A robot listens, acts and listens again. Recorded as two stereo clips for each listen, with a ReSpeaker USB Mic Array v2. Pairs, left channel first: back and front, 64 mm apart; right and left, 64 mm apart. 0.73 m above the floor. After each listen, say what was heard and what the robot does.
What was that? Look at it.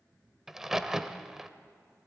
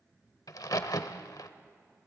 The crack: 85° right. Turn 85° right.
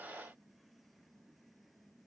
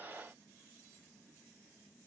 Facing where the crack came from. I can't hear it now.